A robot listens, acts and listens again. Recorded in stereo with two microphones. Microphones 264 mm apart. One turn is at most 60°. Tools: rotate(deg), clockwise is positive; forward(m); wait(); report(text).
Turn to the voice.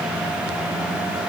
wait()
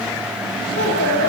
rotate(-40)
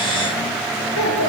rotate(-60)
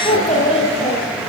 rotate(-20)
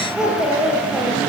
report("Found it: a child speaking, straight ahead, over 4 m away.")